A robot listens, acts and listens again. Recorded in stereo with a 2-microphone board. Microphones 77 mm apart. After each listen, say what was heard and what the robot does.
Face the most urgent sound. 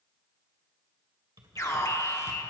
The alarm: about 40° left or 140° left. Turn 40° left.
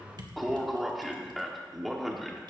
Facing the alarm.